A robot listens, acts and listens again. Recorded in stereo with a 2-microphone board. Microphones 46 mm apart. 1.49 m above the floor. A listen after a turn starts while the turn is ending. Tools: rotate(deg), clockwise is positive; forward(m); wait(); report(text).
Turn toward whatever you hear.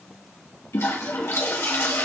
rotate(-65)
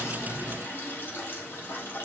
rotate(-50)
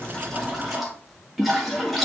report("Facing the toilet flushing, 2 to 4 m away.")